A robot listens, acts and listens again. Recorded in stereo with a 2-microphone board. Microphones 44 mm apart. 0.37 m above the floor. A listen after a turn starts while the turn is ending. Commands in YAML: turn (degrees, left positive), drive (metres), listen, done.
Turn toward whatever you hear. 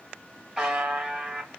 turn: -30
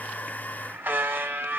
turn: -135
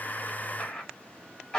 turn: 15
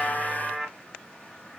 done: "Facing the buzzer."